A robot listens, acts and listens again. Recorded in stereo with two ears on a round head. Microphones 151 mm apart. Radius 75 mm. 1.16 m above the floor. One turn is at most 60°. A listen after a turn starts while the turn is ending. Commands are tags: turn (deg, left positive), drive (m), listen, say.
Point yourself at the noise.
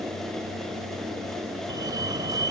<turn deg="-25"/>
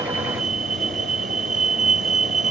<turn deg="-60"/>
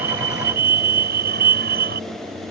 <turn deg="-60"/>
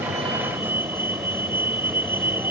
<turn deg="-10"/>
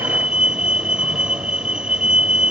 <say>Facing the fire alarm.</say>